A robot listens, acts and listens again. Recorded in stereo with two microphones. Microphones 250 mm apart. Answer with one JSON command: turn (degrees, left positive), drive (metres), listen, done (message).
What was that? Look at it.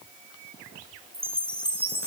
{"turn": -25}
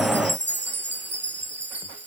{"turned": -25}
{"turn": -130}
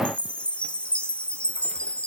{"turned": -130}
{"done": "Facing the chime."}